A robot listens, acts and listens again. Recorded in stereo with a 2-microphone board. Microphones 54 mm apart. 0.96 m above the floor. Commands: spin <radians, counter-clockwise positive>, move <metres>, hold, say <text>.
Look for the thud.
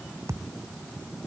spin -1.57
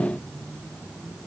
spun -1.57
say Facing where the thud came from. I can't hear it now.